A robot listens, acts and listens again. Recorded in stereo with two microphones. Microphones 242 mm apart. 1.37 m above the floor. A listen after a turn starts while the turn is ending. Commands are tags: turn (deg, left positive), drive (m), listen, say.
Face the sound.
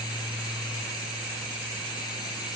<listen/>
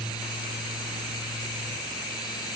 <listen/>
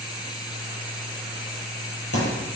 <turn deg="65"/>
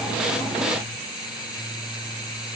<listen/>
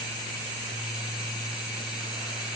<say>I heard a thud, but can't make it out now. It was about straight ahead or 50° left.</say>